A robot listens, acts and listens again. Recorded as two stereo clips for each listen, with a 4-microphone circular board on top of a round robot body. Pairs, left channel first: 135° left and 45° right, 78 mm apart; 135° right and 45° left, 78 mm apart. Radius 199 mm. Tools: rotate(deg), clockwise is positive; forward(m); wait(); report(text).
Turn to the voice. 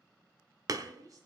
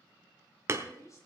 rotate(85)
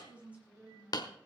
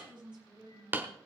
rotate(-30)
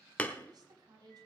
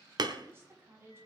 rotate(15)
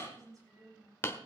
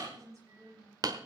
report("Facing the woman speaking.")